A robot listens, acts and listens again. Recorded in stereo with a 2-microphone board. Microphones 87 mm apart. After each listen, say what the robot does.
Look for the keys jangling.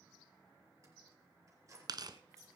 Turn 35° right.
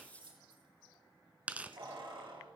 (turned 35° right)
Turn 110° right.
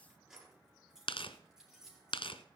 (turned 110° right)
Turn 10° right.
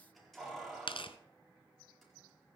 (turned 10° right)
Found it: keys jangling, straight ahead, over 4 m away.